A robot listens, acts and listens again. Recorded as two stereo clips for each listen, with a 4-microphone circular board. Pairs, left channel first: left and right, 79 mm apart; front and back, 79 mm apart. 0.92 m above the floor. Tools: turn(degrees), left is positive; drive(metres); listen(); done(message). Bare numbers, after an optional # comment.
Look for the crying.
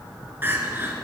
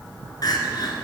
# The crying: 30° right.
turn(-30)
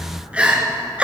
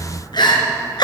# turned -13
# The crying is now 15° right.
turn(-15)
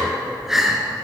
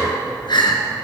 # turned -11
done("Found it: crying, straight ahead, 2 to 4 m away.")